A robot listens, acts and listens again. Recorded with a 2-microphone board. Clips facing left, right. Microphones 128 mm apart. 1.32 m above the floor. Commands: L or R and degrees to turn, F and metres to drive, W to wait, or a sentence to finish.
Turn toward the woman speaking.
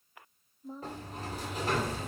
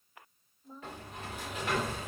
L90
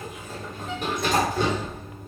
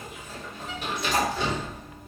W
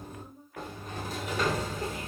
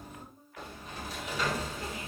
L55
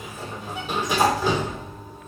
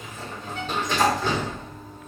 W
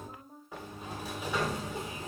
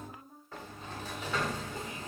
L25
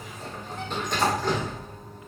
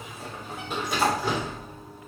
W
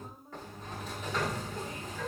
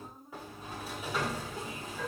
Found it: a woman speaking, straight ahead.